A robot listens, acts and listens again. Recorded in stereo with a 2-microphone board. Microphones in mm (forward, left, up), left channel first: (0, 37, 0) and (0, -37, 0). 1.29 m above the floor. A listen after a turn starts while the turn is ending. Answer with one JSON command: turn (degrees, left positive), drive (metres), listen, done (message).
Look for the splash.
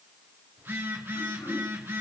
{"listen": true}
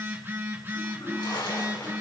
{"turn": 90}
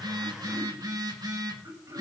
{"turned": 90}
{"done": "I heard a splash from this way, but can't make it out now."}